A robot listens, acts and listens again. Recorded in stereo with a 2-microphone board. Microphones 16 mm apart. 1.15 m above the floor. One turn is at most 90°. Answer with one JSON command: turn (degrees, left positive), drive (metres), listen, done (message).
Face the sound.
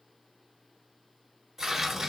{"turn": -25}
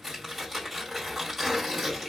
{"done": "Found it: tearing paper, straight ahead, 2 to 4 m away."}